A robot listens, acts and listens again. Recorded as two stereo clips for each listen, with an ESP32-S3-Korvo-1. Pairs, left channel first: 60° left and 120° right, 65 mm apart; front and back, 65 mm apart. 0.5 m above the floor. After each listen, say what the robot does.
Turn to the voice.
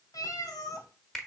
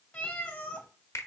Keep listening.
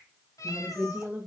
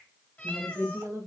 Turn 180° left.
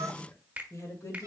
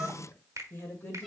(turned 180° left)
Turn 50° left.
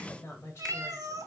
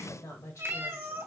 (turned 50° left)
Turn 20° left.
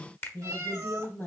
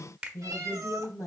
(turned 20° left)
Facing the woman speaking.